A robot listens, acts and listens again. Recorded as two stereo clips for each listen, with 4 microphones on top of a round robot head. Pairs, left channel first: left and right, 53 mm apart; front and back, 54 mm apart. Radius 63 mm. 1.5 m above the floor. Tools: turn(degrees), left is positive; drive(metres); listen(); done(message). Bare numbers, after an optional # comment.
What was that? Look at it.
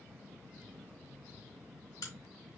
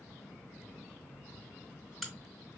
# The crack: 90° left.
turn(90)
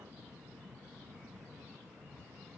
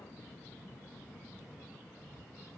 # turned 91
done("I heard a crack from this way, but can't make it out now.")